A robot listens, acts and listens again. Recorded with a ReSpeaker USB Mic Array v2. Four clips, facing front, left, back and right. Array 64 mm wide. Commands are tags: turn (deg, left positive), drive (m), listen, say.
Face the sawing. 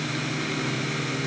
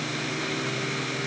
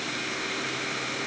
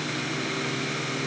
<listen/>
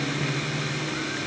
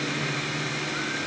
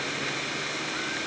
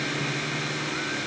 <listen/>
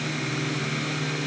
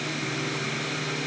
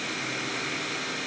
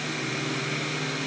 <say>I can't make out sawing.</say>